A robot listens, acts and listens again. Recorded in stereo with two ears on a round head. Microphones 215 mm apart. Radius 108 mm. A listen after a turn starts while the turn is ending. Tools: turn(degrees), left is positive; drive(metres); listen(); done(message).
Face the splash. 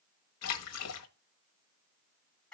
turn(degrees=70)
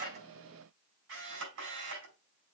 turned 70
listen()
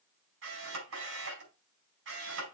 done("I heard a splash, but can't make it out now. It was about straight ahead or 40° left.")